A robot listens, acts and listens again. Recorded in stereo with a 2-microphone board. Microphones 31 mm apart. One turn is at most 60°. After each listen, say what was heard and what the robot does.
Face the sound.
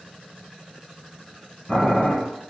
Turn 30° left.
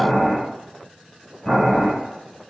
So it is at 150° left. Turn 60° left.
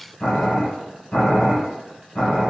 The boiling is now 65° left. Turn 60° left.
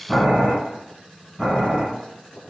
The boiling is now 10° left. Turn 10° left.
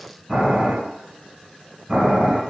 Found it: boiling, straight ahead.